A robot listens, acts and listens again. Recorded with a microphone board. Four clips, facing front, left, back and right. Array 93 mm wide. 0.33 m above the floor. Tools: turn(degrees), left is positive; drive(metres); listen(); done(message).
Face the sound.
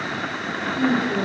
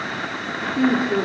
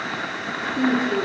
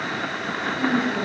turn(degrees=95)
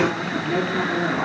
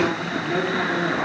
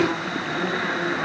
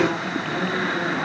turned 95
turn(degrees=25)
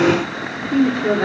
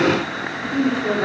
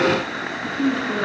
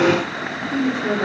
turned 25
turn(degrees=-15)
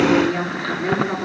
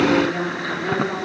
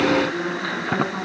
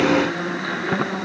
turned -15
done("Facing the woman speaking.")